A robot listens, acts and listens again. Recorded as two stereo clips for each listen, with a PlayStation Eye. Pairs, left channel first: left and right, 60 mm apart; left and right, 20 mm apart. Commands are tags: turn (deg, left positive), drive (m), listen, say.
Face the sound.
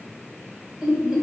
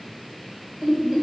<turn deg="-30"/>
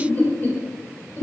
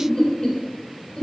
<turn deg="40"/>
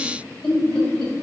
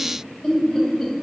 <turn deg="15"/>
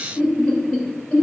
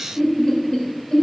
<turn deg="10"/>
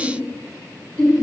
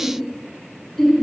<say>Found it: laughter, straight ahead.</say>